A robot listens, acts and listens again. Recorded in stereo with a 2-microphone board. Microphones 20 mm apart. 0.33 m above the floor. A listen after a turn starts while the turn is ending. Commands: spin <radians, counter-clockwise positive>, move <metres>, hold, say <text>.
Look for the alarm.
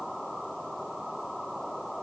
hold
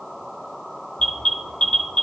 spin 1.05
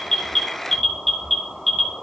spin 0.26
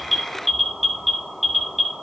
say Facing the alarm, 1 to 2 m away.